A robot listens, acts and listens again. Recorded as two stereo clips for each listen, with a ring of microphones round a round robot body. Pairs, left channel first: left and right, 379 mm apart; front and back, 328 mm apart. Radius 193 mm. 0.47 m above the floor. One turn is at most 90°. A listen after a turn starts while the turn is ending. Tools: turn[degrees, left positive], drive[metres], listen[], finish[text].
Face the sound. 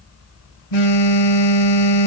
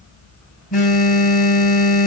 Thought: The phone buzzing: 70° left.
Action: turn[70]
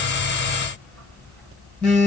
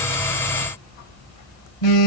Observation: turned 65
Action: finish[Facing the phone buzzing, 1 to 2 m away.]